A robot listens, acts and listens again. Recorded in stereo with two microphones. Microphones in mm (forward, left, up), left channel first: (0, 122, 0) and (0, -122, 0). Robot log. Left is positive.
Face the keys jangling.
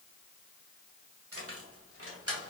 note: The keys jangling: about 70° right or 110° right.
cmd yaw -70
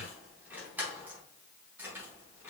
note: So it is at 10° right.
cmd yaw -10
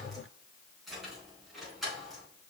end: Facing the keys jangling, over 4 m away.